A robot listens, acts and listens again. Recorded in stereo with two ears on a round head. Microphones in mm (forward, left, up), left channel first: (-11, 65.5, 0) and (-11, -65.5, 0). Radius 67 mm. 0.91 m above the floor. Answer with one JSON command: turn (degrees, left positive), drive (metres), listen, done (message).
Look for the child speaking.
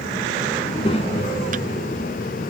{"turn": 45}
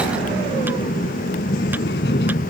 {"turn": 80}
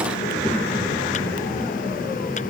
{"listen": true}
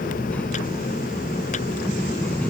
{"turn": 10}
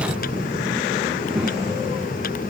{"done": "Facing the child speaking."}